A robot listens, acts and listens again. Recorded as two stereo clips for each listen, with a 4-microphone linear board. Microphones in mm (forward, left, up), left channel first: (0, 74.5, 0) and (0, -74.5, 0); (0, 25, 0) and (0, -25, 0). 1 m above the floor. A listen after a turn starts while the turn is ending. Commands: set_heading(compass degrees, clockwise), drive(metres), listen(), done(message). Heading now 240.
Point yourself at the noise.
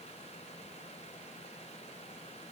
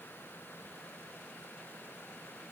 listen()
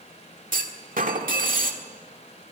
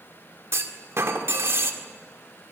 set_heading(305)
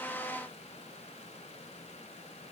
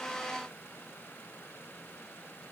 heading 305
listen()
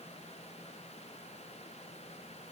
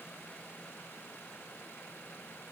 done("I heard a clunk, but can't make it out now. It was about straight ahead or 50° right.")